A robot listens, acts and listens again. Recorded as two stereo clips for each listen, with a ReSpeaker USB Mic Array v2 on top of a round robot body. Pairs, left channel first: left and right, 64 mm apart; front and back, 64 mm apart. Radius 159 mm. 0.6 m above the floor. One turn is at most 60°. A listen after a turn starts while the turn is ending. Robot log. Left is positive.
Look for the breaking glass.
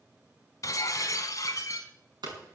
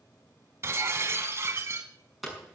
note: The breaking glass: 130° left.
cmd yaw +60
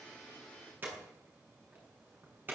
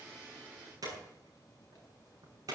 note: Nothing new. It was at 70° left.
cmd yaw +60
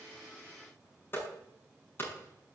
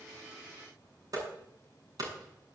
note: Nothing new. It was at 10° left.
cmd yaw +10
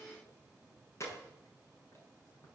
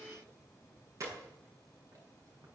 end: Facing where the breaking glass came from. I can't hear it now.